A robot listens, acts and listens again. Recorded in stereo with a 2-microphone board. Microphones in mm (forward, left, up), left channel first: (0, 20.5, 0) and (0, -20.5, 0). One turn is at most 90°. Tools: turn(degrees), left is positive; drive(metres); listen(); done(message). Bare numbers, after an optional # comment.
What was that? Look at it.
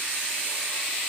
listen()
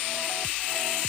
listen()
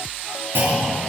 # The clunk: about 60° right or 120° right.
turn(-60)
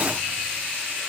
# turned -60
listen()
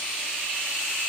done("I heard a clunk, but can't make it out now. It was about straight ahead or 60° right.")